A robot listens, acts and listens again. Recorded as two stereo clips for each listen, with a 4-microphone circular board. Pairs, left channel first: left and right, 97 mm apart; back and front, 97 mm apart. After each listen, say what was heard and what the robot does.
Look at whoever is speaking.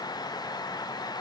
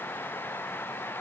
Keep listening.
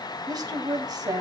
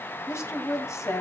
The woman speaking: 125° right. Turn 125° right.
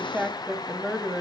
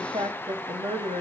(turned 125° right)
Found it: a woman speaking, straight ahead.